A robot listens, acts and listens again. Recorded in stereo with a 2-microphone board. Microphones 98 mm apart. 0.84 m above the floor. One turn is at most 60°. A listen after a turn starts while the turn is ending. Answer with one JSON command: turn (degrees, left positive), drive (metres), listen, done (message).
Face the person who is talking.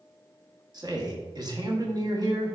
{"turn": -40}
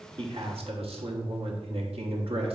{"turn": -60}
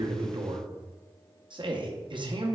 {"turn": -55}
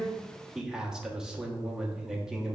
{"done": "Found it: a man speaking, straight ahead, 1 to 2 m away."}